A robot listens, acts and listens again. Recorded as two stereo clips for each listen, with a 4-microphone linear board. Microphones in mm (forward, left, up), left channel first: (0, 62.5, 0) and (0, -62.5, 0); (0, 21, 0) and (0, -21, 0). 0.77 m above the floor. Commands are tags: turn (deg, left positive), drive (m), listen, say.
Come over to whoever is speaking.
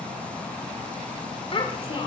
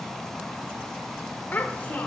<turn deg="45"/>
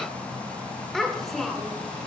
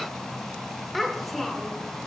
<drive m="1.0"/>
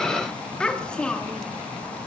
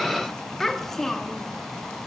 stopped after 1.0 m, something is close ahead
<turn deg="10"/>
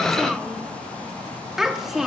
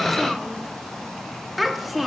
<say>Arrived at the child speaking, straight ahead.</say>